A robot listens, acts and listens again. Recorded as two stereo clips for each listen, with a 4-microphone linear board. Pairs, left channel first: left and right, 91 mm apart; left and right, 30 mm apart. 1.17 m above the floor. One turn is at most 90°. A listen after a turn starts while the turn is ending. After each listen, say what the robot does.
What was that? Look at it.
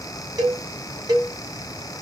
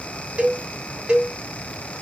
Turn 45° right.
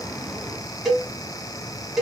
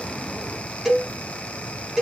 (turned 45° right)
Facing the cowbell, 1 to 2 m away.